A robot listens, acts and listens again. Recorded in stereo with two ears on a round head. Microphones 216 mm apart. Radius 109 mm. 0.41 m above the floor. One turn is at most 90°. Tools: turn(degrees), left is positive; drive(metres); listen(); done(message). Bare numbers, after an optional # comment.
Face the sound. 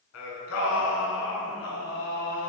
# The singing: about 60° left or 120° left.
turn(60)
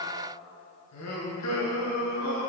# So it is at 80° left.
turn(80)
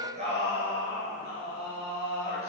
# The singing is now 25° right.
turn(-25)
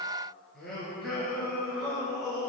done("Found it: singing, straight ahead.")